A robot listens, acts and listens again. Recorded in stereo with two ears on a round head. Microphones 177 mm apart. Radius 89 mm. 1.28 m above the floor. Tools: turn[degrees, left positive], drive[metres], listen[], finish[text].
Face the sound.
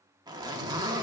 Thought: The zipper: about 20° right or 160° right.
Action: turn[-20]
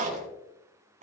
Thought: So it is at 140° right.
Action: turn[-140]
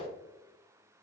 Action: listen[]
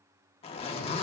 Thought: The zipper is now 30° left.
Action: turn[30]
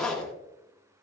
Action: finish[Found it: a zipper, straight ahead.]